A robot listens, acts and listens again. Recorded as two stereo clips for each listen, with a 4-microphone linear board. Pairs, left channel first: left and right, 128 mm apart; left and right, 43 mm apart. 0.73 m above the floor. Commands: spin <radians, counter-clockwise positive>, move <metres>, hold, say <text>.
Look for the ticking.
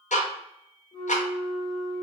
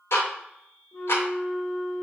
spin 1.22
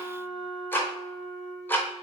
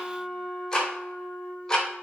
spin 0.26
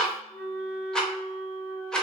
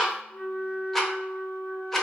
say Facing the ticking.